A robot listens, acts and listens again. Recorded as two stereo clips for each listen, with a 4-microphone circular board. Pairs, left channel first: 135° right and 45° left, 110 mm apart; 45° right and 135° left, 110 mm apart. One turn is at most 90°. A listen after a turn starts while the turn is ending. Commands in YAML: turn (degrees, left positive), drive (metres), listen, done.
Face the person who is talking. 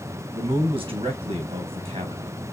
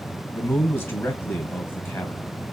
turn: 20
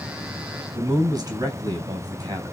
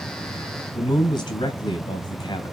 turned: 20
done: "Found it: a man speaking, straight ahead."